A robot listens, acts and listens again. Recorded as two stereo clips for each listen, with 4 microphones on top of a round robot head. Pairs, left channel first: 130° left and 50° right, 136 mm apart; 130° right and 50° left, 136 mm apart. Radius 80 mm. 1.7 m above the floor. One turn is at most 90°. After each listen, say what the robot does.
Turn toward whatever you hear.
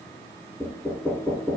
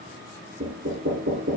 Turn 35° left.
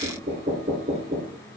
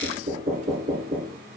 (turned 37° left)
Found it: knocking, straight ahead, over 4 m away.